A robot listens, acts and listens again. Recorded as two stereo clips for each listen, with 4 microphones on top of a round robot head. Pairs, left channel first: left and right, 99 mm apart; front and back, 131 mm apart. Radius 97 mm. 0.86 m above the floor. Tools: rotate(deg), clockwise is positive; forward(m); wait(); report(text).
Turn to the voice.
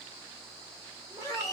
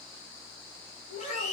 rotate(20)
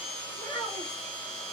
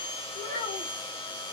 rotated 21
report("Facing the child speaking.")